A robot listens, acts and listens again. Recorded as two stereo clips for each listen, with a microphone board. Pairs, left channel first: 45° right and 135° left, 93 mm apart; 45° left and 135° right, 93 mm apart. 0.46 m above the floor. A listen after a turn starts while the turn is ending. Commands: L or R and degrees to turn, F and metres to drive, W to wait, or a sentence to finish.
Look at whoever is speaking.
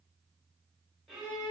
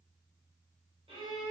W
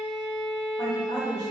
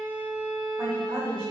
R80
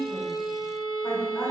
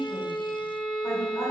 W
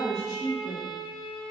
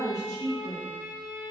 R10
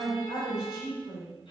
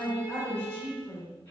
R20
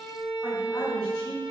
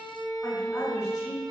W
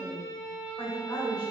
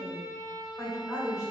Facing the woman speaking, 1 to 2 m away.